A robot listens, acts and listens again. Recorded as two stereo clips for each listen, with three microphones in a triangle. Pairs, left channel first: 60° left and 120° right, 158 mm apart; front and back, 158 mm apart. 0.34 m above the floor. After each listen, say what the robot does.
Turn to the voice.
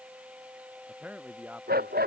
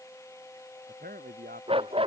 Turn 160° left.
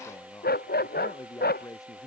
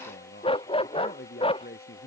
Turn 10° right.
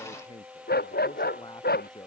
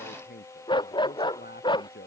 Facing the man speaking.